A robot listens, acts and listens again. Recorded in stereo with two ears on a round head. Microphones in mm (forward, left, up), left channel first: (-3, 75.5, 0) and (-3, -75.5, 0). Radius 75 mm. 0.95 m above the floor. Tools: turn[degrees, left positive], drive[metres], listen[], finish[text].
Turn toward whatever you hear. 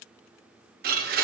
Thought: The blender: about 55° right or 125° right.
Action: turn[-55]
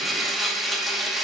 Action: finish[Found it: a blender, straight ahead.]